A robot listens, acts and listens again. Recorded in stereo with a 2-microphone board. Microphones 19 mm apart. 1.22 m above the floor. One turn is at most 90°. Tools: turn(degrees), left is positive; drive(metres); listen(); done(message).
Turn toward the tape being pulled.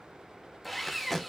turn(degrees=30)
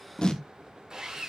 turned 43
turn(degrees=90)
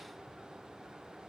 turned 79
turn(degrees=45)
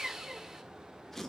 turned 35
turn(degrees=15)
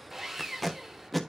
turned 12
done("Facing the tape being pulled, 1 to 2 m away.")